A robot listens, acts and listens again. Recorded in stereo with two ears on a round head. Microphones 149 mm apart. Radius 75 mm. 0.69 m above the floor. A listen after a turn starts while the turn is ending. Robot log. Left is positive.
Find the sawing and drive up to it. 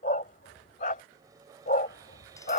note: The sawing: about 20° right or 160° right.
cmd yaw -20
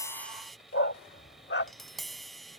cmd fwd 1.0
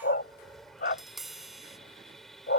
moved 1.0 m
cmd fwd 1.0
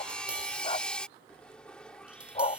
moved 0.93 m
cmd fwd 1.0
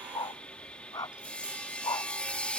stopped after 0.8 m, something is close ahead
note: The sawing is now 10° left.
cmd yaw +10
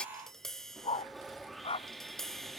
end: I am next to the sawing.